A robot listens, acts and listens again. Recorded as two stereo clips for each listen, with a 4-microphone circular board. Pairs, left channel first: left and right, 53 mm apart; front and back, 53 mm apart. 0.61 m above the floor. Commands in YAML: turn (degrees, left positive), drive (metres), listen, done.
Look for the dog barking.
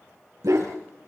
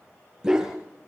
turn: -100
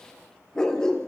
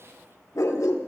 turn: 15
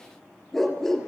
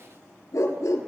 done: "Facing the dog barking, over 4 m away."